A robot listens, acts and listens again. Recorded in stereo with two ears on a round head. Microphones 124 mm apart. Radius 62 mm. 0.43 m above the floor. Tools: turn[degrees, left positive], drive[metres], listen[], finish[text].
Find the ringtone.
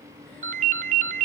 Thought: The ringtone: about 60° right or 120° right.
Action: turn[-60]
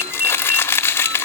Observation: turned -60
Thought: So it is at 15° right.
Action: turn[-15]
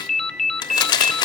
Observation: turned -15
Action: finish[Facing the ringtone.]